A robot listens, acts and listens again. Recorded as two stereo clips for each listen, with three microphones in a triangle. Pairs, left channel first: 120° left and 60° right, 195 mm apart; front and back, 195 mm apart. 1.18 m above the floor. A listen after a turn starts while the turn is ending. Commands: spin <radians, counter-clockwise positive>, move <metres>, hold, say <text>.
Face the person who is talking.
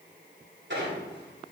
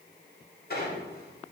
hold
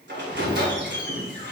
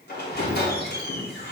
hold
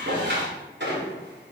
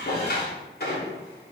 say I can't make out anyone speaking, only a squeak.